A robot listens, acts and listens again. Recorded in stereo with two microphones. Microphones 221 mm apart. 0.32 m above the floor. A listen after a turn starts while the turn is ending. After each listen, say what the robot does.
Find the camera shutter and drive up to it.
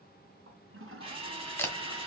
Turn 30° left.
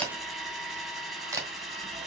Turn 15° right.
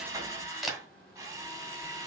Drive 1.0 m forward.
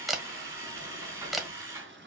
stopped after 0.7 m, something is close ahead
Arrived at the camera shutter, straight ahead.